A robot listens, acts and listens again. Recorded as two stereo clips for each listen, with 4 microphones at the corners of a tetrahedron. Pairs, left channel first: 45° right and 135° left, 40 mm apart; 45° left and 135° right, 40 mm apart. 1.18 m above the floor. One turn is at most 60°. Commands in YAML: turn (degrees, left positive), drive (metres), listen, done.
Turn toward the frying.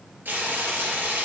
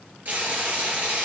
turn: 60
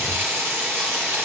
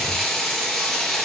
turn: 60
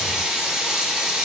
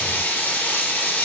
turn: 60
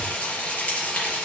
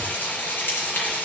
turn: 10
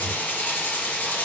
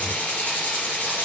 done: "Found it: frying, straight ahead, 2 to 4 m away."